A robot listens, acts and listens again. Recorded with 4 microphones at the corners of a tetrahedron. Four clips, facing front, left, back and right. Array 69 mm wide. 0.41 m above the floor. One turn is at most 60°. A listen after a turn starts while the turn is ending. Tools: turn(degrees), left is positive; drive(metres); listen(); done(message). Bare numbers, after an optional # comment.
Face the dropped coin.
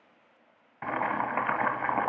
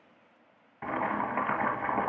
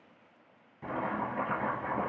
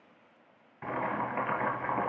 listen()
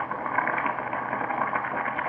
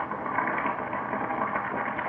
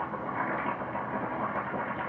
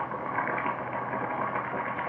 listen()
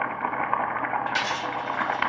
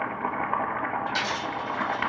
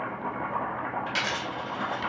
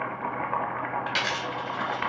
# The dropped coin: 115° right.
turn(-60)
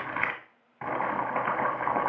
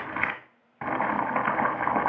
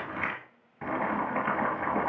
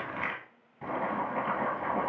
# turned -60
# Nothing new. It was at 55° right.
turn(-55)
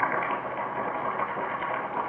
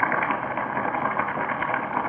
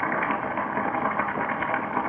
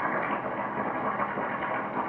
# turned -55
done("I heard a dropped coin from this way, but can't make it out now.")